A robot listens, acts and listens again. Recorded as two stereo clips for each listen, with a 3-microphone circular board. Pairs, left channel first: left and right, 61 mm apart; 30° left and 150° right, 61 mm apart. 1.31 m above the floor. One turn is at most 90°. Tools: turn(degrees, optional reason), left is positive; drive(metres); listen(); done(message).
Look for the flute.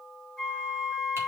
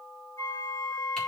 done("Facing the flute, over 4 m away.")